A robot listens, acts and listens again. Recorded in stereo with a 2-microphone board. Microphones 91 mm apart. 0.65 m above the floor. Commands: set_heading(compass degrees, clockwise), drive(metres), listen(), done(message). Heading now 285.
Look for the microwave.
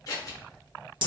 listen()
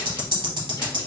listen()
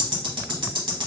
done("I can't make out a microwave, only scissors and ticking.")